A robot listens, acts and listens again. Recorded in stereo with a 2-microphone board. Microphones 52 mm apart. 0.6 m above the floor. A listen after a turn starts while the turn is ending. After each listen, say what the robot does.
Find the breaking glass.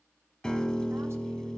Keep listening.
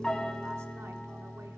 Keep listening.
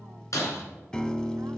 Turn 90° left.
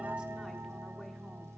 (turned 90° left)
Facing where the breaking glass came from. I can't hear it now.